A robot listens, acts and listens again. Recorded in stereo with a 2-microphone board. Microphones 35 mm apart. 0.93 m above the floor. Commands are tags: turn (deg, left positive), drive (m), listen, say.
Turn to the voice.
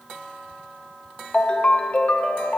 <listen/>
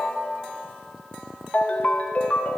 <listen/>
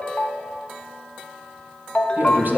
<turn deg="-65"/>
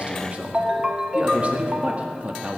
<turn deg="-40"/>
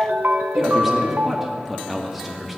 <say>Found it: a man speaking, straight ahead.</say>